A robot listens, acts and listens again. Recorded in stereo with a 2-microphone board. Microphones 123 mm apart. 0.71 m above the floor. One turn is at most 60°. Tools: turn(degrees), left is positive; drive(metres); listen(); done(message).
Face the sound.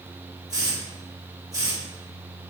turn(degrees=-30)
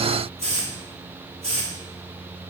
turn(degrees=-60)
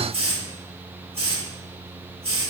turn(degrees=-60)
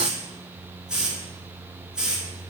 turn(degrees=-10)
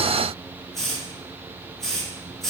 done("Found it: a hiss, straight ahead, 1 to 2 m away.")